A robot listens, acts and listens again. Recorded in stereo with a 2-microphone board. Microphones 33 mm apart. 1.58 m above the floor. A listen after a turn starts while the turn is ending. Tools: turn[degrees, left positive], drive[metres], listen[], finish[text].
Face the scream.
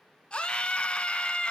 Thought: The scream: about 35° left or 145° left.
Action: turn[35]
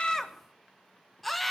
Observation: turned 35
Action: finish[Facing the scream.]